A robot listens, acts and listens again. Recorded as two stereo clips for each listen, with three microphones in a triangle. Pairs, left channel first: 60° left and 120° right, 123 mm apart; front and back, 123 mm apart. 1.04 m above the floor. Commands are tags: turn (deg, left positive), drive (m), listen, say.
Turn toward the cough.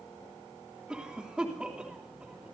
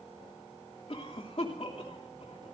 <turn deg="-40"/>
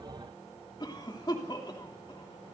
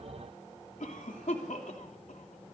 <say>Found it: a cough, straight ahead, 2 to 4 m away.</say>